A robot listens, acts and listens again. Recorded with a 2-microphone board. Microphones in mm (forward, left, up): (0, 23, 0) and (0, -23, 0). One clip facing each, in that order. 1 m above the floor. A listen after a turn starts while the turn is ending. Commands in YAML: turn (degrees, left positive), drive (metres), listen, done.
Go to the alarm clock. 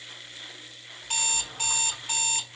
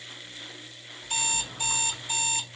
turn: 55
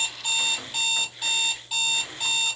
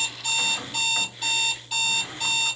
drive: 1.0
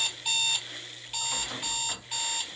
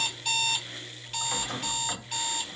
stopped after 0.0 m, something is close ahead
done: "Something is in my way. I am facing the alarm clock but have not reached it."